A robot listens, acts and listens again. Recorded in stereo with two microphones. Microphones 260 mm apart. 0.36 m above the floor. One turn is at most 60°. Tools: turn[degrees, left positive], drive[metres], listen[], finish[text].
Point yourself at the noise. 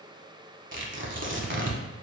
Thought: The tearing paper: about 50° right or 130° right.
Action: turn[-50]
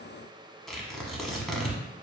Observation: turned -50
Action: finish[Found it: tearing paper, straight ahead, under 1 m away.]